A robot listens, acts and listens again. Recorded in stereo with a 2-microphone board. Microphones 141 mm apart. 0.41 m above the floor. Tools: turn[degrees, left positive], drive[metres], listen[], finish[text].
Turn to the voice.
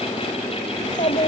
Thought: The child speaking: about 55° left or 125° left.
Action: turn[55]
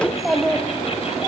Action: finish[Facing the child speaking, 2 to 4 m away.]